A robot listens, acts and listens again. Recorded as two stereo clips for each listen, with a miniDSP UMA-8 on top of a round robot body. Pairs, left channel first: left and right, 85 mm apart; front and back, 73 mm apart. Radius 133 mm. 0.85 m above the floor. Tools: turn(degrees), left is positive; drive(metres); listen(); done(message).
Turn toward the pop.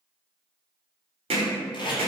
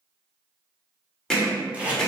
listen()
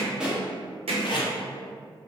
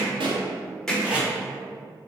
turn(degrees=-170)
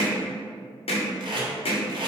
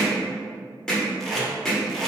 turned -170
done("I heard a pop from this way, but can't make it out now.")